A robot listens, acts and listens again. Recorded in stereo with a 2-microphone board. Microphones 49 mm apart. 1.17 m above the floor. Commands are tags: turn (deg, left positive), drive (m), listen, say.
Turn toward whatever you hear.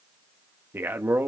<turn deg="-50"/>
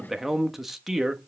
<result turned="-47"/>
<say>Facing the man speaking.</say>